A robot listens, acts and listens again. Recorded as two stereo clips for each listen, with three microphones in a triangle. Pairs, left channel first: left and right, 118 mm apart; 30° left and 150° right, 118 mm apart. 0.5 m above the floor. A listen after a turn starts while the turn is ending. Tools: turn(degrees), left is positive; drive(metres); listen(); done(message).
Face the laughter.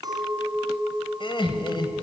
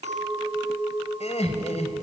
turn(degrees=45)
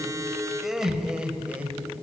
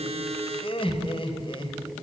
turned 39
turn(degrees=-15)
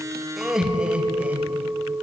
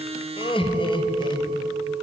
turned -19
turn(degrees=-15)
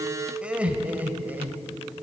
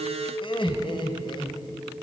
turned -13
turn(degrees=-15)
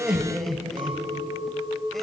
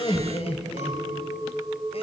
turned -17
done("Facing the laughter.")